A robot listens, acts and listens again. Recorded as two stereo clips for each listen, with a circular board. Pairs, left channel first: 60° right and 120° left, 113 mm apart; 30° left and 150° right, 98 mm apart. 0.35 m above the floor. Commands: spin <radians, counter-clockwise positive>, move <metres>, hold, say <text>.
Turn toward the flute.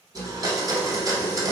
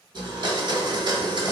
hold
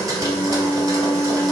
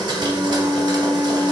spin -2.01
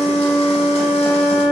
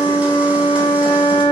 say Found it: a flute, straight ahead.